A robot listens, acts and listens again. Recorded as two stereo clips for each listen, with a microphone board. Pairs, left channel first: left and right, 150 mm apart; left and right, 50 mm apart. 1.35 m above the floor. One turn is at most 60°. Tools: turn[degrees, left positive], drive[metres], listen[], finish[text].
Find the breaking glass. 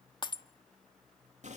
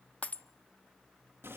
Thought: The breaking glass: about 30° left or 150° left.
Action: turn[30]
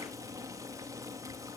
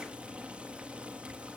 Action: listen[]
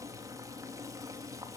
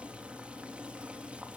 Action: finish[I heard breaking glass, but can't make it out now. It was about straight ahead or 120° left.]